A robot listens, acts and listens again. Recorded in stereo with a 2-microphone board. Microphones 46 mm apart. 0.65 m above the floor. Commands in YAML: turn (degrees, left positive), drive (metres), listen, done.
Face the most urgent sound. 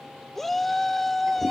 turn: 30
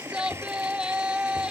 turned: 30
turn: -25
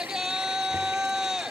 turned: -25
turn: -15
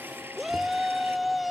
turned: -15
done: "Facing the shout."